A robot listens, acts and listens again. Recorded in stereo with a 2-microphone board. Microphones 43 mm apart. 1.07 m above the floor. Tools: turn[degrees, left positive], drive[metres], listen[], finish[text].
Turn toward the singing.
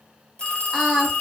Action: turn[30]
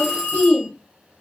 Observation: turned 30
Thought: So it is at 145° left.
Action: turn[145]
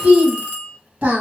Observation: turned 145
Thought: The singing is now 40° right.
Action: turn[-40]
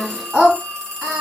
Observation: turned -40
Thought: The singing is now 20° right.
Action: turn[-20]
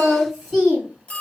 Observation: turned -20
Action: finish[Facing the singing, 1 to 2 m away.]